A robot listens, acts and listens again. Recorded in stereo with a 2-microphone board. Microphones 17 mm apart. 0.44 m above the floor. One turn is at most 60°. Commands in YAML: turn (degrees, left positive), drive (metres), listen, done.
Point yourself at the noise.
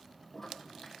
turn: 15
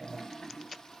turn: 60
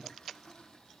turn: 60
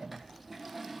done: "Facing the toilet flushing, 2 to 4 m away."